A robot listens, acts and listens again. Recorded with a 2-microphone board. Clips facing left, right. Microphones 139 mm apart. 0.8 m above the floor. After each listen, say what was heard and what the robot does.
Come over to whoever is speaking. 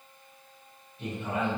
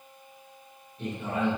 The man speaking: about 55° right or 125° right. Turn 55° right.
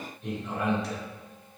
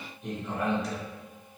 Drive 1.0 m forward.
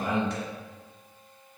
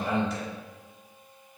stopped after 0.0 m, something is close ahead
Something is in my way. I am facing the man speaking but have not reached it.